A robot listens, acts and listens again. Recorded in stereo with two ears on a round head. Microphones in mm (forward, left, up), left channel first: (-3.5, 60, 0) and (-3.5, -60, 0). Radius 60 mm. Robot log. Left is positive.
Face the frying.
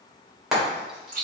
cmd yaw -30
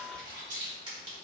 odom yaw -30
cmd idle
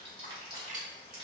cmd idle
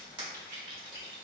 end: I heard frying, but can't make it out now. It was about 25° left or 145° right.